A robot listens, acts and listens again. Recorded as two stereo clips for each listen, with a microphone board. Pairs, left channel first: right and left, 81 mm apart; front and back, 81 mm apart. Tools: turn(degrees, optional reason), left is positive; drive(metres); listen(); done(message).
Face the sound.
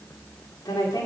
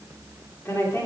turn(degrees=-60, reason="The woman speaking: 60° right.")
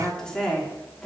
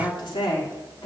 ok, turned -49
done("Found it: a woman speaking, straight ahead.")